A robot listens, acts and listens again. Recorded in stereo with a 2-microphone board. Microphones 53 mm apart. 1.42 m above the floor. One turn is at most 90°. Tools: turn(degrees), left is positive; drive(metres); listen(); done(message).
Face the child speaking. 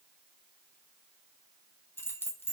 listen()
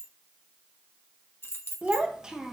turn(degrees=-30)
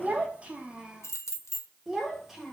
turn(degrees=-30)
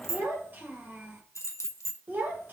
turn(degrees=-90)
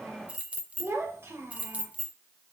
turn(degrees=-50)
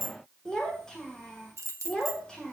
turn(degrees=10)
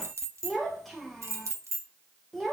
done("Found it: a child speaking, straight ahead, 1 to 2 m away.")